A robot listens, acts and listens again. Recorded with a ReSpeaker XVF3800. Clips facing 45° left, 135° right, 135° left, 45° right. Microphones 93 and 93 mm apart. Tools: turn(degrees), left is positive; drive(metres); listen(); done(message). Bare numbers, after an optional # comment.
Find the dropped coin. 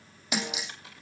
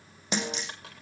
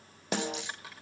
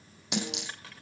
# The dropped coin: 40° right.
turn(-40)
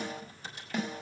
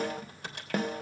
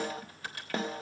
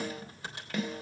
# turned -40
done("Facing where the dropped coin came from. I can't hear it now.")